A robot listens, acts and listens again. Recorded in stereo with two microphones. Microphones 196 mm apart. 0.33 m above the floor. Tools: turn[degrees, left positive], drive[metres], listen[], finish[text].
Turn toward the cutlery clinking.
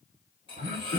Thought: The cutlery clinking: about 25° left or 155° left.
Action: turn[25]
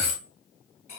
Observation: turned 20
Thought: So it is at 130° left.
Action: turn[130]
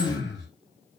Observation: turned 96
Thought: Nothing new. It was at 35° left.
Action: turn[35]
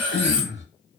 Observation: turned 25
Thought: The cutlery clinking is now 10° left.
Action: turn[10]
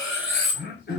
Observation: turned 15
Action: finish[Found it: cutlery clinking, straight ahead, 1 to 2 m away.]